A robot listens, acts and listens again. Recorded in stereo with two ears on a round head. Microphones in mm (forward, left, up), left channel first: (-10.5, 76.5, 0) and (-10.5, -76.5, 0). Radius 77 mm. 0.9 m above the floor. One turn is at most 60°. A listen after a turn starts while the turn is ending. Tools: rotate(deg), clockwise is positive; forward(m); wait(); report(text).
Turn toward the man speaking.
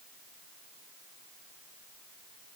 wait()
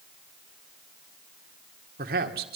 rotate(60)
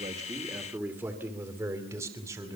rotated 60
rotate(15)
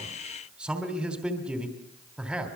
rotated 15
report("Found it: a man speaking, straight ahead, 2 to 4 m away.")